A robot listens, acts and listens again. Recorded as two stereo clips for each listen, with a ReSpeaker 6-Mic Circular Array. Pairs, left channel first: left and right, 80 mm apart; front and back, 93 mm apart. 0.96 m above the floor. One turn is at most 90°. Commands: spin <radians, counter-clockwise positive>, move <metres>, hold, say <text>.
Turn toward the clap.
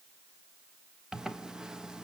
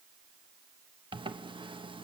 hold
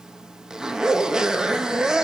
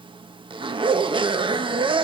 hold
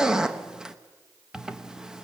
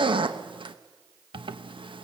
say I can't make out a clap to turn to.